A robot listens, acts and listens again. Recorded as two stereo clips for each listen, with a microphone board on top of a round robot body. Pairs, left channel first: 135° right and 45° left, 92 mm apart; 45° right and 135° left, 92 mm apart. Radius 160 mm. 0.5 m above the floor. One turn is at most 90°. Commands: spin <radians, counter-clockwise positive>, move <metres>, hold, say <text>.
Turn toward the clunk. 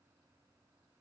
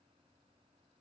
hold
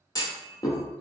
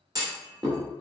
spin 1.57
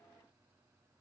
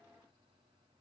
spin 1.57
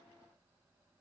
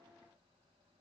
say Facing where the clunk came from. I can't hear it now.